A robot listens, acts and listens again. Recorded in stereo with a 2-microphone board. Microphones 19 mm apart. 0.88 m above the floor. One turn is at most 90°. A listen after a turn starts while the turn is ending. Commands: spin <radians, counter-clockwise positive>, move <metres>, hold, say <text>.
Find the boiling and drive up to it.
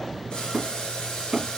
spin 1.22
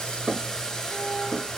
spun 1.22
spin 0.61
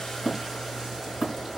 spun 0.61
hold
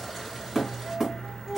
hold
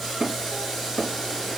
move 1.0
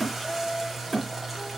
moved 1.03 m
hold
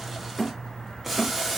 spin -0.26
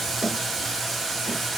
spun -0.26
move 1.0
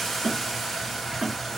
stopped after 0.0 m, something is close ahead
say I am next to the boiling.